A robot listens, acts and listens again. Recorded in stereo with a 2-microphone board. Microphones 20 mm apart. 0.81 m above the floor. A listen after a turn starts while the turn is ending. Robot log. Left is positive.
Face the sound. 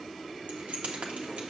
cmd yaw -90
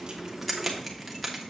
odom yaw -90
end: Found it: keys jangling, straight ahead.